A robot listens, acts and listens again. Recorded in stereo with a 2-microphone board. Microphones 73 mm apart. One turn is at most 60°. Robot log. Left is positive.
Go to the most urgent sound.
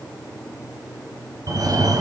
note: The fire alarm: about 55° right or 125° right.
cmd yaw -55
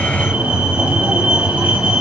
note: So it is at 20° right.
cmd yaw -20
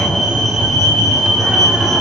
cmd fwd 1.0
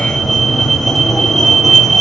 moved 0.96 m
cmd fwd 1.0
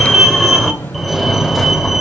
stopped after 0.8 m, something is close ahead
end: Arrived at the fire alarm, straight ahead.